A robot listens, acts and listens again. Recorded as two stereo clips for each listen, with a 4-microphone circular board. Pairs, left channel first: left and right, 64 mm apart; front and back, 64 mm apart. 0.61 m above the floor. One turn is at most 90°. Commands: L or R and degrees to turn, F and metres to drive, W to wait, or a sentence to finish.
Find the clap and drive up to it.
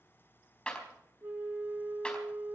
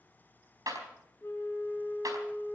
L90
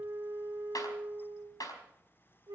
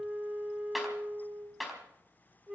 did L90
L90
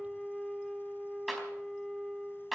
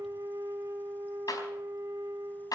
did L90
F1.0
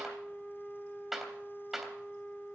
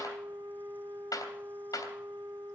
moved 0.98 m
F1.0
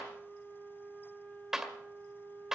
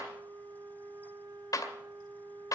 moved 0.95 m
R10
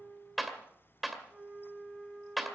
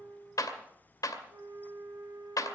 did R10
F1.0
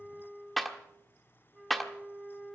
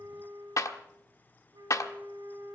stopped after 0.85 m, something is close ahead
Arrived at the clap, straight ahead.